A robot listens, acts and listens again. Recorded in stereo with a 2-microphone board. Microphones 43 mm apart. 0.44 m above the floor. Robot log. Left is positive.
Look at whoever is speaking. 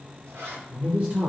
note: The man speaking: about 35° right or 145° right.
cmd yaw -35
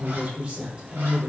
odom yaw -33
note: So it is at 25° right.
cmd yaw -25
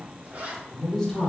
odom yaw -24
note: The man speaking is now 20° left.
cmd yaw +20
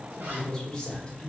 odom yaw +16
note: The man speaking is now 20° left.
cmd yaw +20
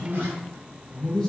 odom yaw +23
note: The man speaking is now 10° left.
cmd yaw +10
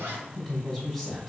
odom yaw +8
end: Found it: a man speaking, straight ahead.